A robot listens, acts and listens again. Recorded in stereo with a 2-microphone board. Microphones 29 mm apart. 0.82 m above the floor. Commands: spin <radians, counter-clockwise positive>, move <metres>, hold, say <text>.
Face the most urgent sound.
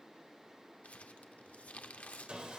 hold
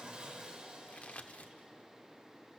hold
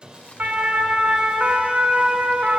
spin -1.31
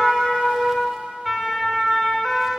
spin -0.26
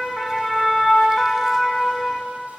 say Found it: a siren, straight ahead, 2 to 4 m away.